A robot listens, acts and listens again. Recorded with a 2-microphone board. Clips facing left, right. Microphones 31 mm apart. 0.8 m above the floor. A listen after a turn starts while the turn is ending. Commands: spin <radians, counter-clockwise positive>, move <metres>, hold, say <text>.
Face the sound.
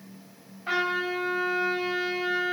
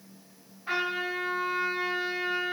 spin 1.05
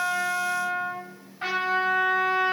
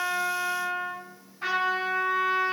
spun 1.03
spin 1.05
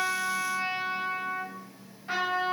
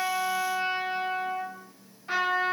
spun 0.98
say Found it: a trumpet, straight ahead.